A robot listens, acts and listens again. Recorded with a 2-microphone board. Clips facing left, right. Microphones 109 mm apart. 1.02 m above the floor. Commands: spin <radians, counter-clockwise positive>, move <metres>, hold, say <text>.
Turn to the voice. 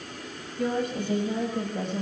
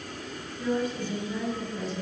spin 1.13
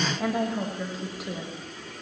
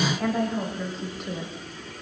say Found it: a woman speaking, straight ahead, over 4 m away.